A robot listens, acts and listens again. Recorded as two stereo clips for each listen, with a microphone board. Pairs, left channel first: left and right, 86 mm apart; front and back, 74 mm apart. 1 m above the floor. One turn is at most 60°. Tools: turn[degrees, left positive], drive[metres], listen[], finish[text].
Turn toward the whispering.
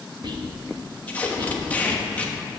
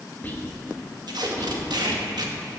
Thought: The whispering: 65° right.
Action: turn[-60]
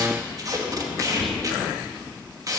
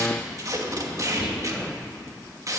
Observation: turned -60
Action: listen[]
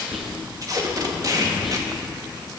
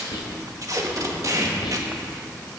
Action: finish[Facing the whispering, 1 to 2 m away.]